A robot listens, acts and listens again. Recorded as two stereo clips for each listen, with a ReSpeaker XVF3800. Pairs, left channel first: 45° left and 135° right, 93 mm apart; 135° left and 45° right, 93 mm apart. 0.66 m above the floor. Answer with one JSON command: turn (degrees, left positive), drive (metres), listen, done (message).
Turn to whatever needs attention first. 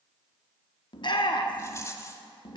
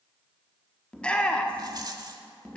{"turn": 60}
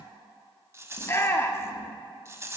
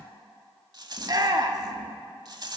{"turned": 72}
{"turn": -10}
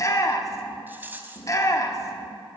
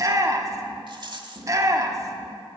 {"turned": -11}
{"done": "Found it: a shout, straight ahead."}